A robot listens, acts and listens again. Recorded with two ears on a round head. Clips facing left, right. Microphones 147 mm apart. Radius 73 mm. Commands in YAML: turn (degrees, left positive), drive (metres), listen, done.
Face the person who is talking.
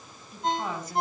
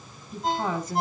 turn: -65
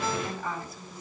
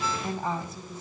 turn: -25
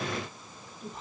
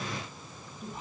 done: "Found it: a woman speaking, straight ahead."